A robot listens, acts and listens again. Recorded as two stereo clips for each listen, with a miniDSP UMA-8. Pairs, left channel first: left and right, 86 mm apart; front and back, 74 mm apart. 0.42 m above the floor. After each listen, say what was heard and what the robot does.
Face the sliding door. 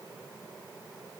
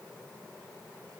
Keep listening.
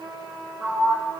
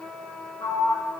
The sliding door: 10° right. Turn 10° right.
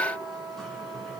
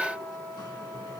Keep listening.
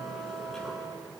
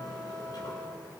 Keep listening.
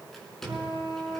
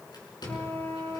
Found it: a sliding door, straight ahead, over 4 m away.